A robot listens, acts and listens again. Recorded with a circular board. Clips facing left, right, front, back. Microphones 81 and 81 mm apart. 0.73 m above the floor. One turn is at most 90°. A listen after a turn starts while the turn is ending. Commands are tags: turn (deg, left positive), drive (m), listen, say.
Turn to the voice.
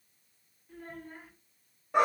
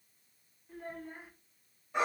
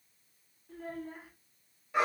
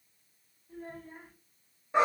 <turn deg="-10"/>
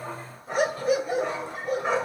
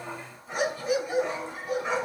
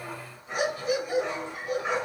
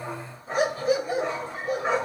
<listen/>
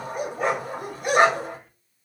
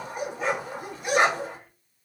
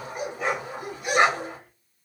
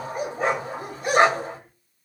<listen/>
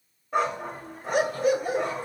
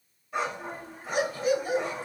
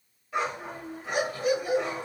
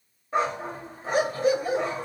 <say>Found it: a child speaking, straight ahead.</say>